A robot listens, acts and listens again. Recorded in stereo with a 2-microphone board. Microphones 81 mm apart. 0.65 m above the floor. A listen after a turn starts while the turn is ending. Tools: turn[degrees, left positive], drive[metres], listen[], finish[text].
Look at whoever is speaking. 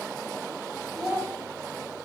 Action: turn[-30]
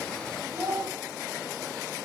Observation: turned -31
Thought: So it is at 140° right.
Action: turn[-140]
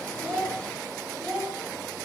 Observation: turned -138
Action: finish[Found it: a child speaking, straight ahead.]